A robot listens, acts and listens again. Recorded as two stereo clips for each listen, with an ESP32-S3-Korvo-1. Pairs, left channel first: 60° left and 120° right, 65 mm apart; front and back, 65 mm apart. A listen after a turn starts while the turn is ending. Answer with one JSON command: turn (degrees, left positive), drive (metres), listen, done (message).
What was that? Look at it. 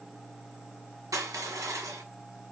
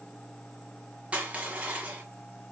{"turn": -110}
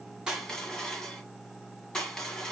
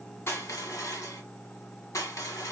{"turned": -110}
{"turn": -15}
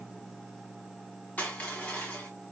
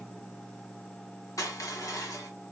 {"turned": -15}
{"done": "Facing the crushing."}